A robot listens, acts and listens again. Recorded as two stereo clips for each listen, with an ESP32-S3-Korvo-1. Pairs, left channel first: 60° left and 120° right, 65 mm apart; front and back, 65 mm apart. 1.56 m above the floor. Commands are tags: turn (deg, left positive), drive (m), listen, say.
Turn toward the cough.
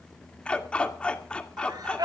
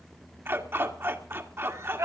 <turn deg="-135"/>
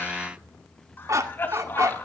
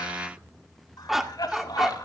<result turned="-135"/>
<say>Facing the cough.</say>